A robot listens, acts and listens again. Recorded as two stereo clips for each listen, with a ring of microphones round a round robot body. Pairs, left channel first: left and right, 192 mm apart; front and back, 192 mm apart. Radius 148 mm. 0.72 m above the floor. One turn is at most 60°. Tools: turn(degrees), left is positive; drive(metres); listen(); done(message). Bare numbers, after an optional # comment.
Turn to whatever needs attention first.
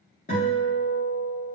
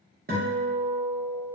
listen()
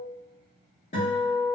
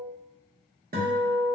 listen()
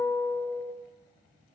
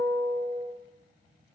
done("I can't make out anything urgent to turn to.")